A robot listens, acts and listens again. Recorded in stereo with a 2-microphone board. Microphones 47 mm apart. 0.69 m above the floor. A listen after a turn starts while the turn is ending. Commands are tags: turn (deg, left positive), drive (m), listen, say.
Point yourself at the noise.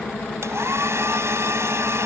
<turn deg="-75"/>
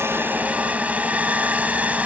<turn deg="-35"/>
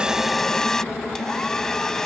<turn deg="10"/>
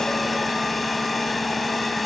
<listen/>
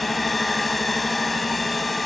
<say>Found it: a hair dryer, straight ahead.</say>